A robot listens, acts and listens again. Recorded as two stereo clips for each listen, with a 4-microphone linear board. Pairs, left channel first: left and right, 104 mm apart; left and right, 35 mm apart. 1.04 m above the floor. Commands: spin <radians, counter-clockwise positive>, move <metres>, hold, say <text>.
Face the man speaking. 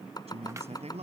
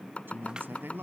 spin -1.57
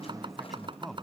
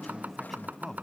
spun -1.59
say Facing the man speaking.